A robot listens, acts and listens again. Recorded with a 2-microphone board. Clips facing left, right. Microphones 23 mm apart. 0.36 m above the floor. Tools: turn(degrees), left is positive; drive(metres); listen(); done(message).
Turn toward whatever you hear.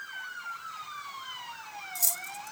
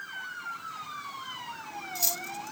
turn(degrees=-25)
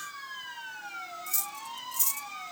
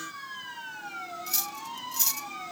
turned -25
turn(degrees=-125)
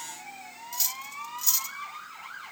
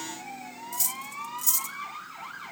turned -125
turn(degrees=35)
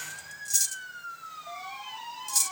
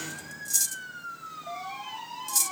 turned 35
done("Found it: cutlery clinking, straight ahead.")